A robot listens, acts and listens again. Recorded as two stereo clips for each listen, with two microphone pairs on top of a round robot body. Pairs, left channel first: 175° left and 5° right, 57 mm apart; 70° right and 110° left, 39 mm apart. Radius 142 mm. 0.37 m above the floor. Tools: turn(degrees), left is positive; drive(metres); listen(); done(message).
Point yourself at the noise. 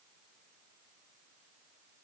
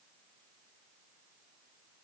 listen()
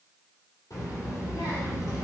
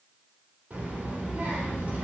turn(degrees=160)
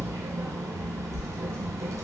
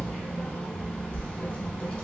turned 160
turn(degrees=-15)
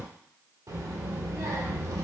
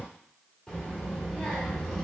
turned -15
done("Found it: a child speaking, straight ahead, 1 to 2 m away.")